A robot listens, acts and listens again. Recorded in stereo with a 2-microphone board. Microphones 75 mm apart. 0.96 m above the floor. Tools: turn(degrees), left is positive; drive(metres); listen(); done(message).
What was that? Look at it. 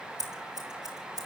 turn(degrees=-60)
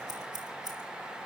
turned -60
turn(degrees=-65)
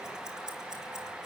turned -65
turn(degrees=-10)
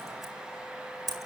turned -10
done("Found it: scissors, straight ahead.")